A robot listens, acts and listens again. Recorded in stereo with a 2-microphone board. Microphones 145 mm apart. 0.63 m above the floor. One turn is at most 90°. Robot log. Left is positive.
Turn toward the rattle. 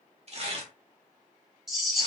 cmd yaw -30
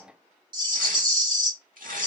note: So it is at 145° right.
cmd yaw -90
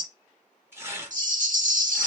note: The rattle is now 65° right.
cmd yaw -65
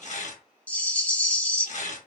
note: The rattle is now 15° left.
cmd yaw +15
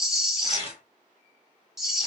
end: Found it: a rattle, straight ahead, under 1 m away.